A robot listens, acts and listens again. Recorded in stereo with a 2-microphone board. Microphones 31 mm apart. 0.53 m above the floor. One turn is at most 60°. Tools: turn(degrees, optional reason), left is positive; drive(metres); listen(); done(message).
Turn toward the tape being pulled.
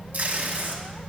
turn(degrees=-60, reason="The tape being pulled: about 70° right or 110° right.")
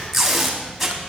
done("Facing the tape being pulled.")